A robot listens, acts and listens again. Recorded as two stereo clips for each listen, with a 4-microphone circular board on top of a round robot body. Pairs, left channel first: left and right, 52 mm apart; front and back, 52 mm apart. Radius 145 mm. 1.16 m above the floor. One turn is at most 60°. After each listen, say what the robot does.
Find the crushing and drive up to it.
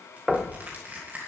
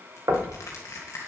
Turn 30° right.
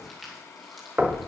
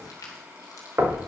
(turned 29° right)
Drive 1.0 m forward.
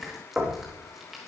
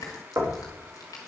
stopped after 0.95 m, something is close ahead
I am next to the crushing.